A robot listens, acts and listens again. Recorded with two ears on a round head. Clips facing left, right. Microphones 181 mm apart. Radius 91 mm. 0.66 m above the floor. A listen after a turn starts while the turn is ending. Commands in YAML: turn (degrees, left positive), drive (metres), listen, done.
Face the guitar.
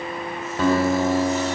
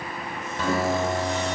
turn: 40
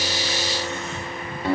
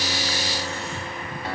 turn: 100
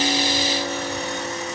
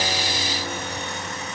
listen: true
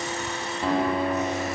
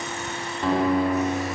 done: "Found it: a guitar, straight ahead."